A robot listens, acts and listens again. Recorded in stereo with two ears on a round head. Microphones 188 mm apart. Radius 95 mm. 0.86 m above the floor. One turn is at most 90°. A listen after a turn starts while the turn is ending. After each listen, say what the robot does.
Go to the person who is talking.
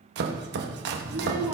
Turn 30° right.
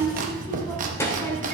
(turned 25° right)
Turn 15° left.
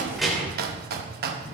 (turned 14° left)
Drive 1.0 m forward.
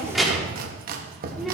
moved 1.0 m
Drive 1.0 m forward.
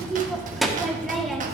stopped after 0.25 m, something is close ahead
Arrived at the child speaking, straight ahead.